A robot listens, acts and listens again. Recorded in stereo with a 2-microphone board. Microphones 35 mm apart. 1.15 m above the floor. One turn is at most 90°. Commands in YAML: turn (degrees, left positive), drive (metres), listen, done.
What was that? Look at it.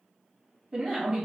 turn: -30
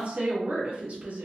turn: -90
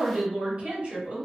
turn: -35
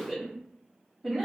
done: "Facing the woman speaking, 1 to 2 m away."